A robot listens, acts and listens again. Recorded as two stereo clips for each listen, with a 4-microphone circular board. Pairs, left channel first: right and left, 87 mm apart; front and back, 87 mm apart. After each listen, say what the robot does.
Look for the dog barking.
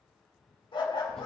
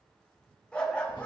Turn 75° right.
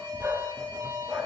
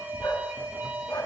Turn 20° left.
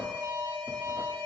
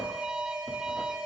Keep listening.
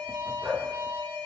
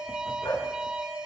Turn 20° left.
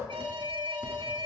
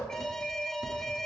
Keep listening.
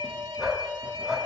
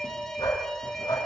Found it: a dog barking, straight ahead, over 4 m away.